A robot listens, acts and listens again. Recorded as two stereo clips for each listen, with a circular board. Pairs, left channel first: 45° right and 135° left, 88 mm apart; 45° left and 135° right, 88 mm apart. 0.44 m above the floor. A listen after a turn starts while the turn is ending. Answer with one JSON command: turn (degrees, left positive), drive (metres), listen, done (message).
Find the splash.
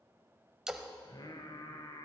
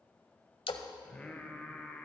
{"turn": 50}
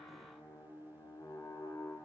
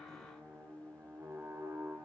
{"done": "Facing where the splash came from. I can't hear it now."}